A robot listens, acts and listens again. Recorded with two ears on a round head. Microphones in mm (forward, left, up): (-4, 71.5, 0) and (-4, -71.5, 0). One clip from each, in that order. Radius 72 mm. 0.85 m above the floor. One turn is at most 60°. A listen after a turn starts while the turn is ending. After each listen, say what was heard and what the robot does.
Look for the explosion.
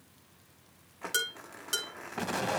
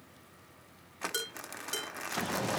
The explosion: about 55° left or 125° left. Turn 55° left.
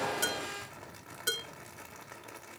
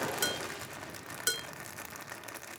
Keep listening.
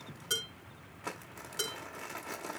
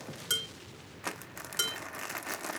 I heard an explosion, but can't make it out now. It was about straight ahead or 70° left.